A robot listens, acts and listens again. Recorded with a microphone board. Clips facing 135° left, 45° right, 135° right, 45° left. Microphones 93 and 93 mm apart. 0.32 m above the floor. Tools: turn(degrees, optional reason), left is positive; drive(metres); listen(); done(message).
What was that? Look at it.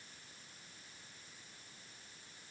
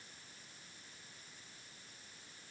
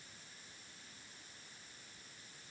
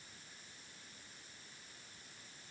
listen()
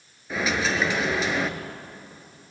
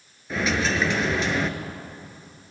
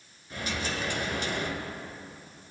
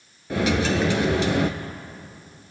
turn(degrees=45, reason="The dropped coin: 45° left.")
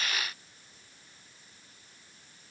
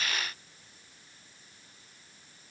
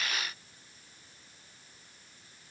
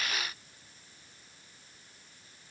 done("I heard a dropped coin from this way, but can't make it out now.")